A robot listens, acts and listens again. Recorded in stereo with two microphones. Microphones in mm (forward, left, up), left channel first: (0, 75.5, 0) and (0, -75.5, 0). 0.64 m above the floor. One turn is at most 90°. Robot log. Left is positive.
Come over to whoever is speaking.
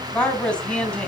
cmd yaw +30
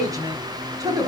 note: So it is at 25° right.
cmd yaw -25
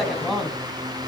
cmd fwd 1.0
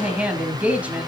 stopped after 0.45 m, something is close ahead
note: The woman speaking is now 10° right.
cmd yaw -10
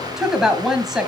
end: Something is in my way. I am facing the woman speaking but have not reached it.